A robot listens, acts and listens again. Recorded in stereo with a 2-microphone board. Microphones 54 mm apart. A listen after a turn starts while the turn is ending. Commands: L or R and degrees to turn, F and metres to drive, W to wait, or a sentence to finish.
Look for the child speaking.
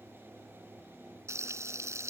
W
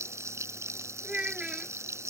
R15
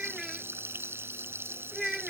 Found it: a child speaking, straight ahead.